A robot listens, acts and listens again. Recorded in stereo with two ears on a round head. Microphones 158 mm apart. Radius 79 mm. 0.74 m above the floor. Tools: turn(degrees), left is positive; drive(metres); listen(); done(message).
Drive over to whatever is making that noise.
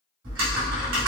turn(degrees=-90)
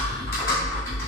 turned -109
turn(degrees=15)
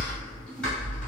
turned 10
drive(metres=1.0)
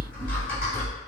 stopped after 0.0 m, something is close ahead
turn(degrees=10)
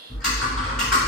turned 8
done("Something is in my way. I am facing the typing on a keyboard but have not reached it.")